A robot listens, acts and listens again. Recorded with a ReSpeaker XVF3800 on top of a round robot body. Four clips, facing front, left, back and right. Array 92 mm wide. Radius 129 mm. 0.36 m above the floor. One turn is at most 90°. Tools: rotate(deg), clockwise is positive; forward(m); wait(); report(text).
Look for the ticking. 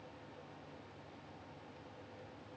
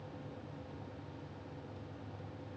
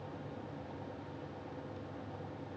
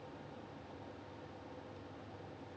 wait()
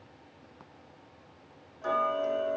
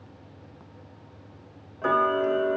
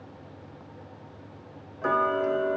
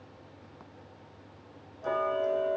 rotate(-90)
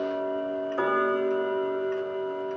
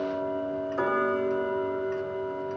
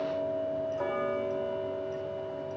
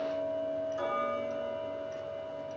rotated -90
rotate(-35)
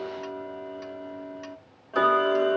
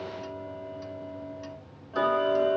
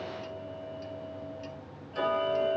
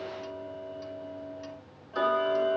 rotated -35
report("Found it: ticking, straight ahead, 1 to 2 m away.")